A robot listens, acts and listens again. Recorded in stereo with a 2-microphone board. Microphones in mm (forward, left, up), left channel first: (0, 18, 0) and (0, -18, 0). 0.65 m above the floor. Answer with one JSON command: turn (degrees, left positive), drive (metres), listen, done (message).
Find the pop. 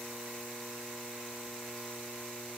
{"listen": true}
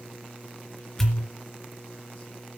{"turn": 30}
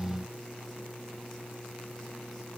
{"listen": true}
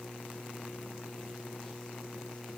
{"done": "I heard a pop, but can't make it out now. It was about 25° right or 145° left."}